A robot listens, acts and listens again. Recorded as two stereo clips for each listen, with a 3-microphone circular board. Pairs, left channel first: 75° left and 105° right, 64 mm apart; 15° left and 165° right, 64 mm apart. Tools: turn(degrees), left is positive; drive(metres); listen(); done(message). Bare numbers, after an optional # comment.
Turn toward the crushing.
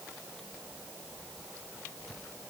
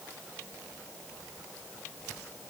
listen()
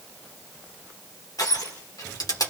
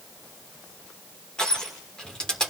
# The crushing: 90° left.
turn(90)
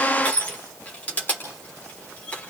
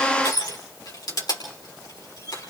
done("Facing the crushing, over 4 m away.")